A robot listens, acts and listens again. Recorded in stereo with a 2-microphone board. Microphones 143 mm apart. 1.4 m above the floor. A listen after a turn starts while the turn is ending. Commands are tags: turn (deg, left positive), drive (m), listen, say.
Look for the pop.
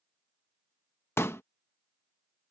<turn deg="15"/>
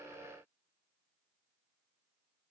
<listen/>
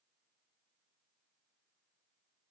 <say>I heard a pop, but can't make it out now. It was about straight ahead or 150° left.</say>